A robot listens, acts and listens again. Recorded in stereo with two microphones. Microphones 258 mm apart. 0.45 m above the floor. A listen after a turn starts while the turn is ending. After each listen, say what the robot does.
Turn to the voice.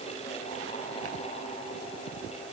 Keep listening.
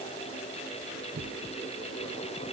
Keep listening.
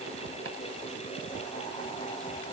I can't make out anyone speaking.